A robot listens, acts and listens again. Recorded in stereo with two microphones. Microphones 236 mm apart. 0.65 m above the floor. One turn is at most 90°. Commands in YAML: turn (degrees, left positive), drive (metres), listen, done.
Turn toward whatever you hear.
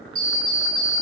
turn: 55
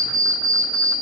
turn: 75
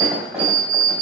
done: "Found it: an alarm clock, straight ahead."